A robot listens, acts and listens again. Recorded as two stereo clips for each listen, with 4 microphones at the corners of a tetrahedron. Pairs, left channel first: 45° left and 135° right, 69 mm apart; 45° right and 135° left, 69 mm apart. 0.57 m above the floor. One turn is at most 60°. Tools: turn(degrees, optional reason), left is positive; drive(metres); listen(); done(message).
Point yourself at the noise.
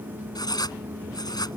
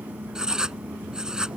turn(degrees=55, reason="The writing: 55° left.")
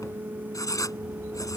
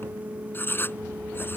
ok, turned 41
turn(degrees=15, reason="The writing is now 15° left.")
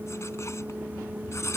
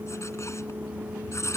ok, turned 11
done("Found it: writing, straight ahead.")